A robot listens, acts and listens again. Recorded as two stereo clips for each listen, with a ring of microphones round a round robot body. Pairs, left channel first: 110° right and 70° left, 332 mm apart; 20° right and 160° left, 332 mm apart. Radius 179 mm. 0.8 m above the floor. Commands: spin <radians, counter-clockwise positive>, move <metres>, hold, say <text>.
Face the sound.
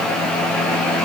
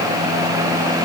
hold
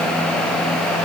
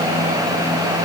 hold
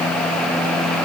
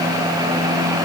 say I can't make out anything to turn to.